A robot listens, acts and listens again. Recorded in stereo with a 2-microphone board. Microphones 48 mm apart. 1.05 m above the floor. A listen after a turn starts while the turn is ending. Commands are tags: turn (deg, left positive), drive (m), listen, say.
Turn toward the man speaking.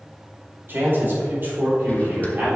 <turn deg="-50"/>
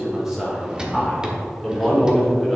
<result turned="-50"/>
<say>Facing the man speaking.</say>